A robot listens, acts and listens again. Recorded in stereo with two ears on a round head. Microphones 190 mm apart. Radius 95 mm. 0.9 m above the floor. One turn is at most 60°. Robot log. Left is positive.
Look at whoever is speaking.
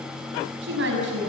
note: The woman speaking: about 65° right or 115° right.
cmd yaw -60
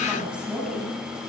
end: Facing the woman speaking, over 4 m away.